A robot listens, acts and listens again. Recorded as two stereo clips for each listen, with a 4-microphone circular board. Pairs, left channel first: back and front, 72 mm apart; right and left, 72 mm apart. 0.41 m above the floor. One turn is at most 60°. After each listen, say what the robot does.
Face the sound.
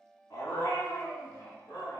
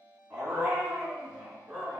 Turn 60° left.
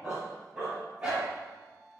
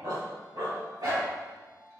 Turn 60° left.
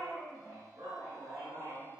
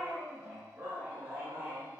Turn 35° left.
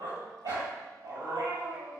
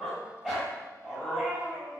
Turn 15° left.
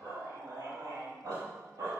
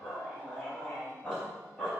Found it: a dog barking, straight ahead, 2 to 4 m away.